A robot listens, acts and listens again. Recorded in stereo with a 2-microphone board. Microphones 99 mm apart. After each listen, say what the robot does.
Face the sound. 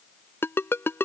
Turn 25° left.
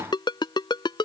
Turn 130° left.
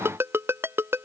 Turn 25° right.
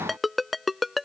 Found it: a ringtone, straight ahead.